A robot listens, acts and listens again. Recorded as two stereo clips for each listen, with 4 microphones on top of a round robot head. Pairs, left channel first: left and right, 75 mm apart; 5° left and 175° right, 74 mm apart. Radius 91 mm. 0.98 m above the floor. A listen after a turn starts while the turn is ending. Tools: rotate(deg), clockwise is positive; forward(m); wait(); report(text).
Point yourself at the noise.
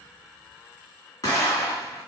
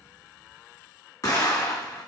rotate(-50)
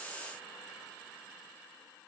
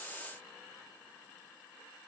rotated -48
report("I heard an explosion from this way, but can't make it out now.")